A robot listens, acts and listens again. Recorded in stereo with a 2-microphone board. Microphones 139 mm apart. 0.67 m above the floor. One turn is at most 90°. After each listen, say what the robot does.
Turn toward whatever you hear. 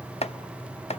Turn 50° left.
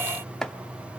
Found it: chopping, straight ahead.